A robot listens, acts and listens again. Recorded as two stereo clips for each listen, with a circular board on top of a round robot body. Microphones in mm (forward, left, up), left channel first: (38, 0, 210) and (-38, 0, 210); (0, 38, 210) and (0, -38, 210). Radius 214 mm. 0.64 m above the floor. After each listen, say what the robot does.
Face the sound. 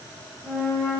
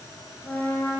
Turn 30° left.
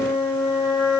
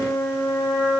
Turn 10° left.
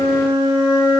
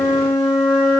Turn 10° left.
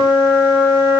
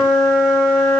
Found it: a flute, straight ahead.